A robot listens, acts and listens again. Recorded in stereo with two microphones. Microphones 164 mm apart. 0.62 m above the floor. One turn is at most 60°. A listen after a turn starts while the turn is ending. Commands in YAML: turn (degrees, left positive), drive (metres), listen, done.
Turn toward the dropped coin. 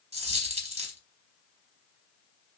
turn: -40
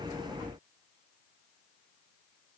listen: true
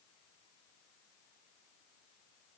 done: "I heard a dropped coin, but can't make it out now. It was about straight ahead or 100° right."